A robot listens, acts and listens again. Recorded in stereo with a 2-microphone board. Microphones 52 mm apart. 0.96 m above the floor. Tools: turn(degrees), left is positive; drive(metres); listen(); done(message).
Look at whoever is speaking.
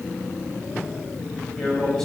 turn(degrees=30)
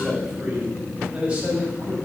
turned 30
turn(degrees=-20)
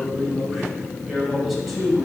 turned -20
done("Found it: a man speaking, straight ahead, over 4 m away.")